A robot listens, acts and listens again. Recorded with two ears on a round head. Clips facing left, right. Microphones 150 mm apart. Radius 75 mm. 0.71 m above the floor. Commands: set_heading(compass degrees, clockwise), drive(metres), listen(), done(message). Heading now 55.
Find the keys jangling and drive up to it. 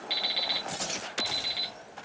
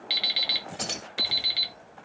set_heading(145)
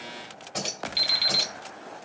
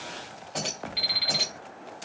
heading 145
drive(1.0)
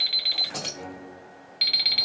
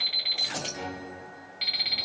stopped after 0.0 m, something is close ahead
done("Something is in my way. I am facing the keys jangling but have not reached it.")